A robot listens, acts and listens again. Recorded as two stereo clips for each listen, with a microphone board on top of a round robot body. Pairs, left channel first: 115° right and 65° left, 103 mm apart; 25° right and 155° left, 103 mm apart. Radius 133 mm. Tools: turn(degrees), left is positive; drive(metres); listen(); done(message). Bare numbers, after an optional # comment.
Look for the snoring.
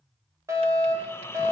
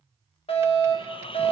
# The snoring: 45° right.
turn(-45)
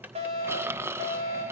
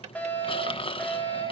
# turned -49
done("Facing the snoring, 1 to 2 m away.")